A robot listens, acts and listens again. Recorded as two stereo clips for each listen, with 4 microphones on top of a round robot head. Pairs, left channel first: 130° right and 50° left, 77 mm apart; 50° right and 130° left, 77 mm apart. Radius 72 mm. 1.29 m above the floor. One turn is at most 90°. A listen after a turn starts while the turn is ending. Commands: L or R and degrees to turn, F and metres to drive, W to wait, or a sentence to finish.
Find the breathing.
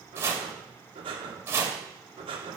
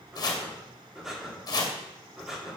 L45
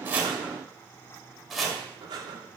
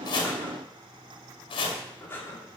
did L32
L15
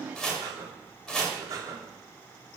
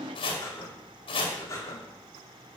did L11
Found it: breathing, straight ahead.